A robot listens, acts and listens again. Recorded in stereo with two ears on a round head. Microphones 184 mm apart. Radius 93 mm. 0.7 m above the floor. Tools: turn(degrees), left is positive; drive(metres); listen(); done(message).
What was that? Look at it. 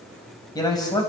turn(degrees=20)
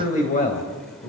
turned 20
turn(degrees=140)
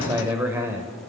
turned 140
turn(degrees=-10)
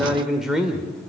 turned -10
done("Found it: a man speaking, straight ahead.")